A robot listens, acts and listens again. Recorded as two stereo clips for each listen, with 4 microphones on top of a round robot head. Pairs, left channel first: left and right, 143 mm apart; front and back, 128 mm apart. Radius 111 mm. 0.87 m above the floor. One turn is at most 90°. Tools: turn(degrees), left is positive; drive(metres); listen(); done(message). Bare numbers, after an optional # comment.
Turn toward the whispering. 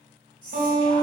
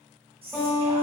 # The whispering: 145° left.
turn(90)
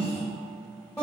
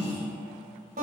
# The whispering is now 45° left.
turn(45)
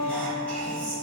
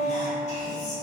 # The whispering is now 10° left.
turn(10)
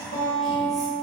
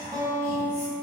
done("Found it: whispering, straight ahead.")